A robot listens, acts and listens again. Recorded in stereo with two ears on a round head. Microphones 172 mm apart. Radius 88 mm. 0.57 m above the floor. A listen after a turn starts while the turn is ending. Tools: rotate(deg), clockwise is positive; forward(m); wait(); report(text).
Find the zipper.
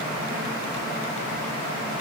wait()
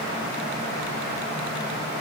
wait()
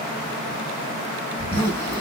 rotate(-30)
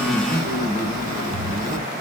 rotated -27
rotate(15)
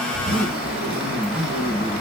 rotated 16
report("Facing the zipper, 2 to 4 m away.")